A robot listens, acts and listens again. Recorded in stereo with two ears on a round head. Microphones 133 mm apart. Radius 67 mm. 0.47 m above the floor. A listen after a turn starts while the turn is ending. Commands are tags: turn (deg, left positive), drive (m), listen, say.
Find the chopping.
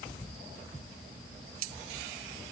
<listen/>
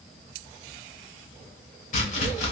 <turn deg="50"/>
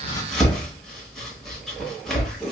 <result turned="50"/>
<say>Facing the chopping.</say>